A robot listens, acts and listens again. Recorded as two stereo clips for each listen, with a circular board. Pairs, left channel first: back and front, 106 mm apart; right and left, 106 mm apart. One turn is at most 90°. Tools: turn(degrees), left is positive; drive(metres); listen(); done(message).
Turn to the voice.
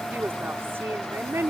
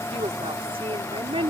turn(degrees=65)
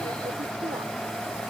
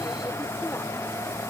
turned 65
listen()
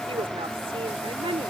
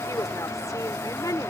turn(degrees=-35)
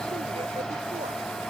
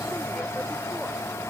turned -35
listen()
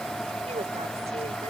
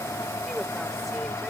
listen()
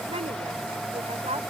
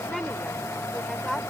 done("Facing the woman speaking.")